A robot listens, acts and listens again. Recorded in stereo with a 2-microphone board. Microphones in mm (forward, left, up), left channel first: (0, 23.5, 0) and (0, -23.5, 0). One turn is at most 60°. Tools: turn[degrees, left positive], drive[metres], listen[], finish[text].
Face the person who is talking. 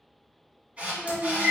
Action: turn[30]
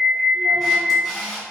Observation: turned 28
Action: listen[]
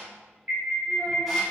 Action: listen[]
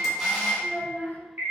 Thought: So it is at 140° left.
Action: turn[60]
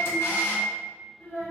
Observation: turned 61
Thought: The child speaking is now 75° left.
Action: turn[60]
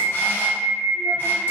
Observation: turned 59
Thought: Nothing new. It was at 15° left.
Action: turn[15]
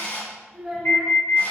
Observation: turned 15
Action: finish[Facing the child speaking.]